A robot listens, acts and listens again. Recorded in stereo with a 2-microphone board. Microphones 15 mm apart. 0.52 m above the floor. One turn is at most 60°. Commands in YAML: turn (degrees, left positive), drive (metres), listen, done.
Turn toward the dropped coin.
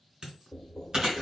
turn: -60
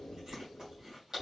listen: true
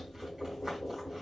done: "I heard a dropped coin, but can't make it out now. It was about straight ahead or 60° right."